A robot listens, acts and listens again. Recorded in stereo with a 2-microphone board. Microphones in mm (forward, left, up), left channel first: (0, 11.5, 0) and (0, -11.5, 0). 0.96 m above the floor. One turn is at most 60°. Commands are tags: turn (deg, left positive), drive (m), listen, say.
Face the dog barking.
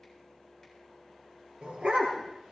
<turn deg="-60"/>
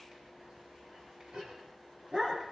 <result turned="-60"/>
<turn deg="-50"/>
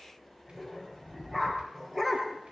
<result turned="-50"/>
<turn deg="-15"/>
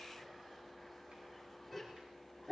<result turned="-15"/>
<say>Found it: a dog barking, straight ahead, over 4 m away.</say>